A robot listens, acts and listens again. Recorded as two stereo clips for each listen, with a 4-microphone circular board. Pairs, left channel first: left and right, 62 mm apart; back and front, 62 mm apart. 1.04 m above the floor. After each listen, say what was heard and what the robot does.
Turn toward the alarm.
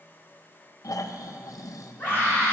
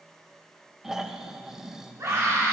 Keep listening.
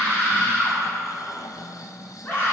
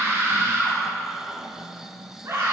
Keep listening.
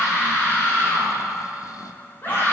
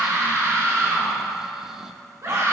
I can't make out an alarm to turn to.